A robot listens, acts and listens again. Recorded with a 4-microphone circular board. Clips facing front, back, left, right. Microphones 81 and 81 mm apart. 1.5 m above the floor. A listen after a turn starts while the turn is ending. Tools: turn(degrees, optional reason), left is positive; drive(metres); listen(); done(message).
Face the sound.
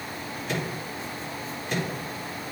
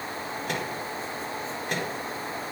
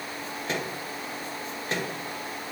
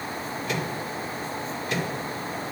turn(degrees=145, reason="The microwave: 145° left.")
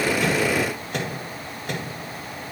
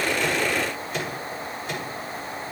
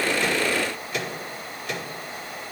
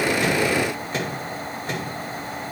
turn(degrees=-35, reason="The microwave is now 35° right.")
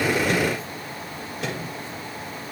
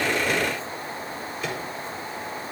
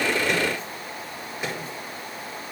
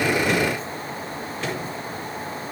turn(degrees=15, reason="The microwave is now 15° left.")
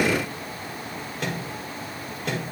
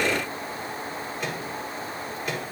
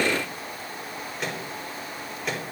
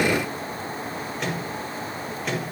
done("Facing the microwave.")